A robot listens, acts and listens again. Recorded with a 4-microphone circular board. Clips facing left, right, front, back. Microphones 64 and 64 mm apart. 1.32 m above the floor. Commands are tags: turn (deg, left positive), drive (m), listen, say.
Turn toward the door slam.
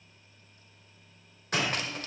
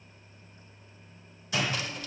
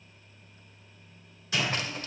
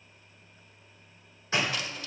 <turn deg="125"/>
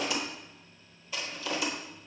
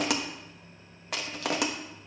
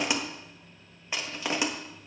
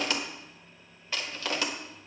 <say>I heard a door slam from this way, but can't make it out now.</say>